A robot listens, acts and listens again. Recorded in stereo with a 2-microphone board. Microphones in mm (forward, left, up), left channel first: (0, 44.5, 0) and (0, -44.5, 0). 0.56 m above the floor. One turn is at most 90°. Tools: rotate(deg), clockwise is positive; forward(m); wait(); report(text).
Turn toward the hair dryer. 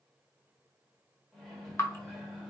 wait()
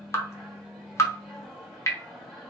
wait()
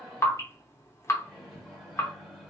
report("I can't make out a hair dryer to turn to.")